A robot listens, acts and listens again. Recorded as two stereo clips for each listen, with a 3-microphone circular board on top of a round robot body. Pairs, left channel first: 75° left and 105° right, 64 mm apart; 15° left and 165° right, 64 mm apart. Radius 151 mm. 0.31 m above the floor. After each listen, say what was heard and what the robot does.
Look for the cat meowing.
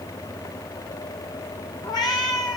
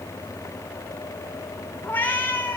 The cat meowing: 80° left. Turn 80° left.
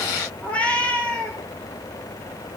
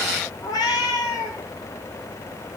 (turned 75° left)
Facing the cat meowing, 2 to 4 m away.